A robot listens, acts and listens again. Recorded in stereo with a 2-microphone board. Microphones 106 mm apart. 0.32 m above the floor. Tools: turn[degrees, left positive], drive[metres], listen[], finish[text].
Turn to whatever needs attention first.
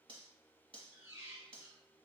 Action: listen[]
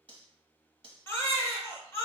Thought: The baby crying: about 20° left or 160° left.
Action: turn[20]
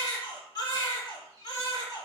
Thought: So it is at 135° left.
Action: turn[135]
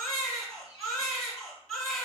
Action: finish[Facing the baby crying.]